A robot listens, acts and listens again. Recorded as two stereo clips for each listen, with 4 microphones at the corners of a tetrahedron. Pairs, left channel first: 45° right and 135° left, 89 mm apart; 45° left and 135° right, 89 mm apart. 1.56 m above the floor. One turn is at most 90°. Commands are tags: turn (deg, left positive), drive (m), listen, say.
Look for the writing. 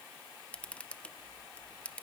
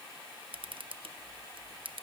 <listen/>
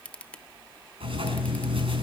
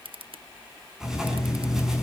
<turn deg="90"/>
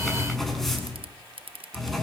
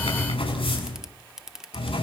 <turn deg="40"/>
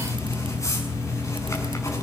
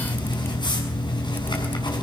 <turn deg="10"/>
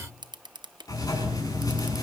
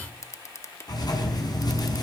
<say>Facing the writing.</say>